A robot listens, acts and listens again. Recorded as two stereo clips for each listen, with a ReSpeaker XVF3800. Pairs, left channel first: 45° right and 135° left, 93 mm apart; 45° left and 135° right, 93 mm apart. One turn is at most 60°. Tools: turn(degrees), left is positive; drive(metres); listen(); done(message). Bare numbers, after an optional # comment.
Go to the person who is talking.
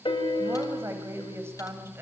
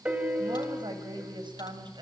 # The woman speaking: 165° right.
turn(-60)
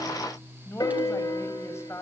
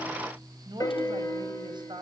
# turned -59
# The woman speaking is now 105° right.
turn(-60)
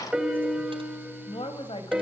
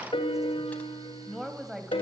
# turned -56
# The woman speaking is now 50° right.
turn(-50)
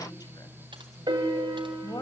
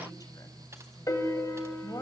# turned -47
drive(1.0)
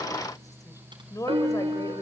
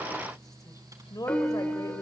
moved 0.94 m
drive(1.0)
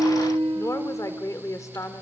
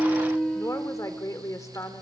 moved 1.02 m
drive(1.0)
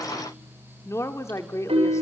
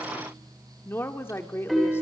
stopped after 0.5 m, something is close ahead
done("Arrived at the woman speaking, straight ahead.")